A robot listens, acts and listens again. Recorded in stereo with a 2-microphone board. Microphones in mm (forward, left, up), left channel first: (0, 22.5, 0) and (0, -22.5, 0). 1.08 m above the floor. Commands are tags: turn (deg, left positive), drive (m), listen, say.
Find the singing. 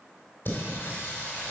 <turn deg="50"/>
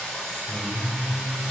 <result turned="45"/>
<say>Found it: singing, straight ahead.</say>